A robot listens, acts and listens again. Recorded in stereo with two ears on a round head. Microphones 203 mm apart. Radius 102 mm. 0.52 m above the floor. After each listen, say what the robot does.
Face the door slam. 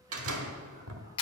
Turn 75° right.
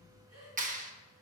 Keep listening.
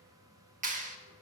I heard a door slam, but can't make it out now. It was about straight ahead or 30° right.